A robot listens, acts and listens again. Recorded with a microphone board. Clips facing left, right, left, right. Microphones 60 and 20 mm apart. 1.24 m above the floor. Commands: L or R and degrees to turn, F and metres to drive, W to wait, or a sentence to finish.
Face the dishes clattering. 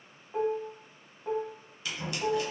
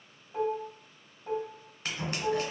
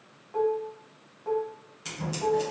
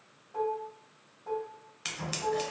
L70
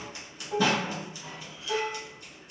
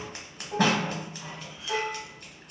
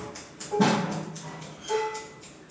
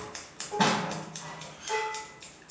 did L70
L15
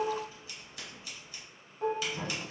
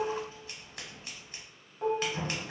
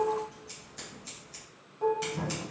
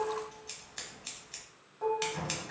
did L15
Found it: dishes clattering, straight ahead, under 1 m away.